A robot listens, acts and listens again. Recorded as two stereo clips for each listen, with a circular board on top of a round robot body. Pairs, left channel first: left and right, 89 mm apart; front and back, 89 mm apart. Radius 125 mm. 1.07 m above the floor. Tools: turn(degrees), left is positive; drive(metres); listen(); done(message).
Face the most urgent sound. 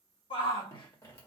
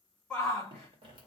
turn(degrees=80)
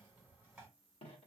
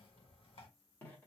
listen()
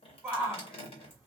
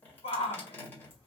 done("Facing the shout.")